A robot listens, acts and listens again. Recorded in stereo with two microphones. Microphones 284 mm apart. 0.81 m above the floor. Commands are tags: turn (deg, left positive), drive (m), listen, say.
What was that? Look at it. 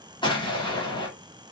<turn deg="15"/>
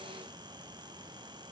<listen/>
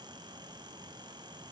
<say>I heard an explosion, but can't make it out now. It was about straight ahead or 150° left.</say>